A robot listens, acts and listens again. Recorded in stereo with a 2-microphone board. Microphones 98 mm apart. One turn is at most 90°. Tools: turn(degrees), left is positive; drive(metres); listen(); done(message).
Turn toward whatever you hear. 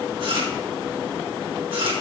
turn(degrees=-60)
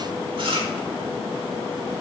turn(degrees=-60)
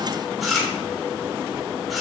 done("Found it: chewing, straight ahead, 2 to 4 m away.")